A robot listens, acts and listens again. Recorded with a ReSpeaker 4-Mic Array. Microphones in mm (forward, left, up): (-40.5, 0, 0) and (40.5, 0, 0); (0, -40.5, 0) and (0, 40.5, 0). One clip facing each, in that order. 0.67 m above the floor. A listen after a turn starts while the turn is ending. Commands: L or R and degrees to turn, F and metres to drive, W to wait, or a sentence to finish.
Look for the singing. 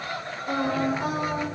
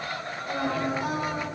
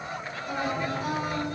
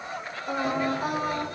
L130
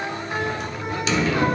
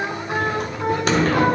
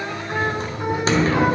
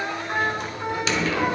W
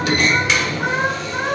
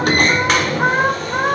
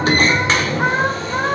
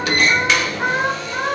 R35
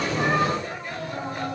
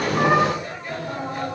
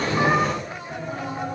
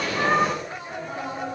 W
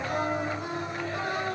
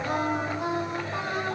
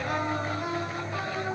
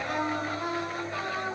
R10
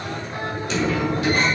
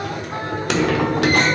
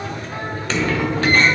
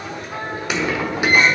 W
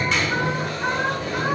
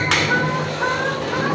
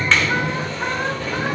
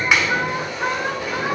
Found it: singing, straight ahead, 2 to 4 m away.